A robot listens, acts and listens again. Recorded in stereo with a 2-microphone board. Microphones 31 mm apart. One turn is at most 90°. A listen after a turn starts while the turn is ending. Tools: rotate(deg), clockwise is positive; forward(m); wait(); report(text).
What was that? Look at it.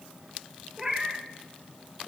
rotate(30)
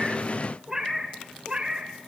rotate(30)
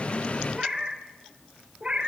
rotate(40)
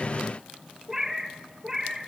rotate(15)
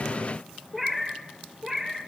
report("Found it: a cat meowing, straight ahead, 2 to 4 m away.")